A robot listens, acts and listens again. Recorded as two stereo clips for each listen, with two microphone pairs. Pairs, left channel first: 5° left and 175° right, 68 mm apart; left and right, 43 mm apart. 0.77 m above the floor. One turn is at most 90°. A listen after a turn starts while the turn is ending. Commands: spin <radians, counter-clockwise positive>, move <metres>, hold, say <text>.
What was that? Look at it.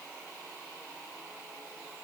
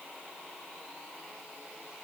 hold
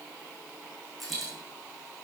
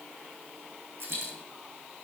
spin -1.48
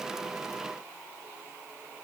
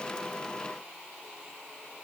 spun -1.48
say I heard a dropped coin from this way, but can't make it out now.